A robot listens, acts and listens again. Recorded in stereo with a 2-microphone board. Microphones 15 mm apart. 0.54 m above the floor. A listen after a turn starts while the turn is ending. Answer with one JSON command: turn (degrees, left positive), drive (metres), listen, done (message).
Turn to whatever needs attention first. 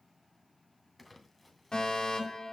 {"turn": 55}
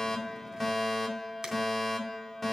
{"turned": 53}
{"turn": 10}
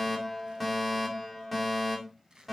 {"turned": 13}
{"done": "Facing the fire alarm, over 4 m away."}